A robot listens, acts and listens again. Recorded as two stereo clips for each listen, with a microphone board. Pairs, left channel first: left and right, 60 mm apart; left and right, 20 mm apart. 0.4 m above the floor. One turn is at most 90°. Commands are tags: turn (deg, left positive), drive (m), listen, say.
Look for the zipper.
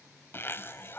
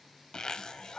<turn deg="40"/>
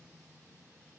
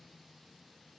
<say>Found it: a zipper, straight ahead.</say>